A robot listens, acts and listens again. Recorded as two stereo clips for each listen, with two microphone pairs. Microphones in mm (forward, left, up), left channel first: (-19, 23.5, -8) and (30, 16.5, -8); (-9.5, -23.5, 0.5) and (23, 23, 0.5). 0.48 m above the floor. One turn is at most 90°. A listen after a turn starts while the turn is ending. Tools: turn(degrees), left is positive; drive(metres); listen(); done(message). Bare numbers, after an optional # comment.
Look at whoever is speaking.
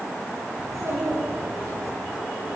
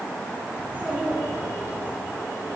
done("Found it: a child speaking, straight ahead, over 4 m away.")